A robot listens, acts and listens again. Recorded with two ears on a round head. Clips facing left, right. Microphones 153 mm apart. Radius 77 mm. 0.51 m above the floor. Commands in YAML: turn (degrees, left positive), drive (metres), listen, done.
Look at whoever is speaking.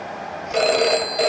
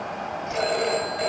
listen: true
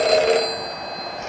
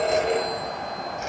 listen: true
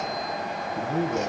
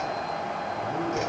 turn: 45
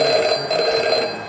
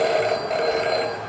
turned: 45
listen: true
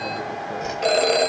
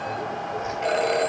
listen: true
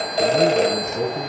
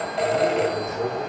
turn: 90
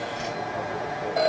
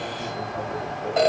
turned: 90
listen: true
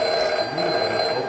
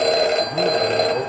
done: "Facing the man speaking, over 4 m away."